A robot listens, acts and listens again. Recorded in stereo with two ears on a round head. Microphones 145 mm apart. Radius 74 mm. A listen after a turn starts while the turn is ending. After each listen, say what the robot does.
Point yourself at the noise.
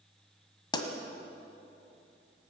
Turn 30° left.
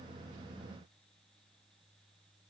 Keep listening.
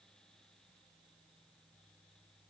I heard a pop, but can't make it out now. It was about straight ahead or 120° left.